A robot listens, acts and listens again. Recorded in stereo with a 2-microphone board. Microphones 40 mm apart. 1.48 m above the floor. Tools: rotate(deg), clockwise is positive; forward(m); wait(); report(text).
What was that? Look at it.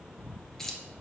rotate(-30)
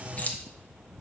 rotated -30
rotate(-135)
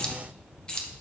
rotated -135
rotate(-25)
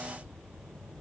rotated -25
wait()
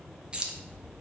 rotate(25)
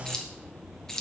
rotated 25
rotate(-20)
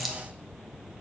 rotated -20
report("Facing the keys jangling, under 1 m away.")